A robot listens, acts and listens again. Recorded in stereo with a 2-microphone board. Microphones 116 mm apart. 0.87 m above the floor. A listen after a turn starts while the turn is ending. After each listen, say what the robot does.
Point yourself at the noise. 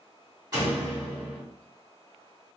Turn 35° right.
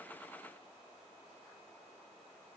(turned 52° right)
Keep listening.
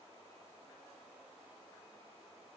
I heard a door slam, but can't make it out now. It was about 15° left or 95° right.